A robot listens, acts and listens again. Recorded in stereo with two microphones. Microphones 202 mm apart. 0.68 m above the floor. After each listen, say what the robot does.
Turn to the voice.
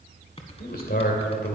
Turn 45° left.
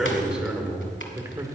Turn 20° right.
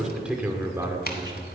Turn 20° right.
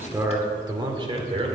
Turn 30° right.
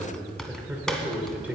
Turn 10° right.
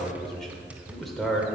Found it: a man speaking, straight ahead.